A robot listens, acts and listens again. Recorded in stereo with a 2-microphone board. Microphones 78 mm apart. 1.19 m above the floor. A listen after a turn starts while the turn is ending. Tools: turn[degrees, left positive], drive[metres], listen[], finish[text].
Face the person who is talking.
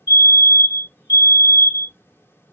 Action: listen[]
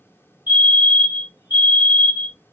Action: listen[]
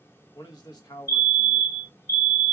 Thought: The man speaking: about 60° left or 120° left.
Action: turn[60]
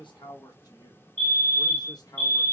Thought: So it is at 60° left.
Action: turn[60]
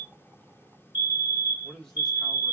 Action: finish[Found it: a man speaking, straight ahead.]